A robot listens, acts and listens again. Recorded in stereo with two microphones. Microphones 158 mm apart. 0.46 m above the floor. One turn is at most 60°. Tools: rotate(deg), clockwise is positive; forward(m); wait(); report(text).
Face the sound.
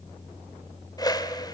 rotate(-25)
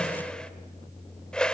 report("Facing the whoosh.")